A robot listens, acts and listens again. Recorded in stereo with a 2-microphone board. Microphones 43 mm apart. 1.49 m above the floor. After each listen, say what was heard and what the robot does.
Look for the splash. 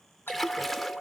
Turn 30° left.
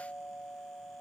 Keep listening.
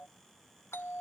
I heard a splash, but can't make it out now. It was about 30° right or 150° left.